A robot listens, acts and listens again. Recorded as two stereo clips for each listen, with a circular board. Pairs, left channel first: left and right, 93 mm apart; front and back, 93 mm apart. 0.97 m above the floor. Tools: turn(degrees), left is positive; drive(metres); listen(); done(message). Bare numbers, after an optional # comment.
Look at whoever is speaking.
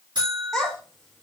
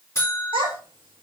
# The child speaking: 175° left.
turn(175)
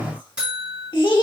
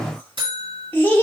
# The child speaking is now 65° left.
turn(65)
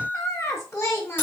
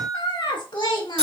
# The child speaking is now 30° left.
turn(30)
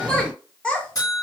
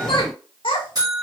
# The child speaking is now 10° left.
turn(10)
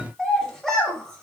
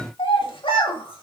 done("Facing the child speaking.")